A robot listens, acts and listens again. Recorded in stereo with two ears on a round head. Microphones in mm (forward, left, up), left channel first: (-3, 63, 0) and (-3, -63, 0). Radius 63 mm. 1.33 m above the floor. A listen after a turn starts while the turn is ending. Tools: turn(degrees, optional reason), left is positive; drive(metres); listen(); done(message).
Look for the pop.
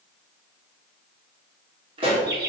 turn(degrees=-40, reason="The pop: about 40° right or 140° right.")
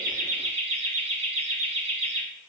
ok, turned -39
listen()
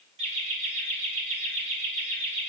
done("I heard a pop, but can't make it out now. It was about straight ahead or 100° right.")